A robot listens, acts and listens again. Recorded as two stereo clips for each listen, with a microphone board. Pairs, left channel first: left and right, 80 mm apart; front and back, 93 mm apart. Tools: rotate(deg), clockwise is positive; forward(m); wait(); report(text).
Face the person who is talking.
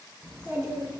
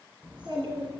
rotate(150)
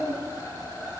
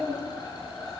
rotate(55)
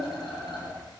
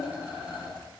rotate(-15)
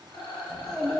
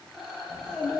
report("Facing the child speaking, 2 to 4 m away.")